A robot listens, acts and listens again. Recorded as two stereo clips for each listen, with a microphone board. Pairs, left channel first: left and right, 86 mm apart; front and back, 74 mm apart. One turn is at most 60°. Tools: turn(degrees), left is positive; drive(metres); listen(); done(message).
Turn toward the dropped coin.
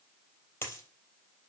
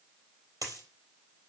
turn(degrees=60)
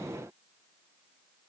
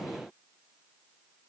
turn(degrees=60)
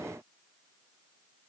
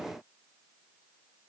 turn(degrees=30)
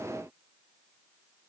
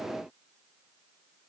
done("Facing where the dropped coin came from. I can't hear it now.")